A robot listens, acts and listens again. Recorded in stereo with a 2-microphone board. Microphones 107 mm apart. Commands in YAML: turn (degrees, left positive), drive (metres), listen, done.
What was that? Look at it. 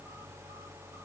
listen: true
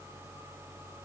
listen: true
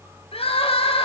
turn: 60
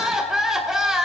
done: "Facing the crying, 2 to 4 m away."